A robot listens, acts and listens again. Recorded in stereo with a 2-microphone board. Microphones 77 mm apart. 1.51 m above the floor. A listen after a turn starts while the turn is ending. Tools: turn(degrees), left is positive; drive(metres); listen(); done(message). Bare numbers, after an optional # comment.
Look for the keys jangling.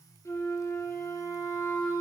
listen()
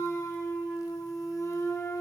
listen()
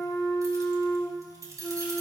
# The keys jangling: about 50° right or 130° right.
turn(-50)
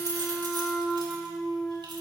listen()
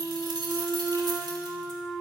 # So it is at 75° right.
turn(-75)
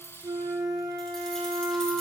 listen()
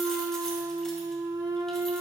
listen()
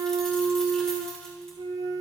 done("Facing where the keys jangling came from. I can't hear it now.")